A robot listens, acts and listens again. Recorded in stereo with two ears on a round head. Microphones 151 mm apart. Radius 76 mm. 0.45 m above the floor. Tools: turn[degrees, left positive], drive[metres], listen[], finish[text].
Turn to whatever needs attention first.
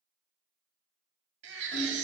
Action: turn[-90]
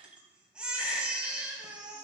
Action: finish[Facing the baby crying.]